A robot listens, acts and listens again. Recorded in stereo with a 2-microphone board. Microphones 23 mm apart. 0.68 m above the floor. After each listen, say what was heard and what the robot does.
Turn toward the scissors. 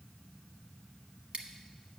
The scissors: about 55° right or 125° right. Turn 55° right.
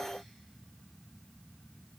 Keep listening.
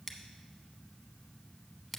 So it is at 10° right. Turn 10° right.
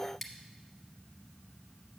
Facing the scissors, 1 to 2 m away.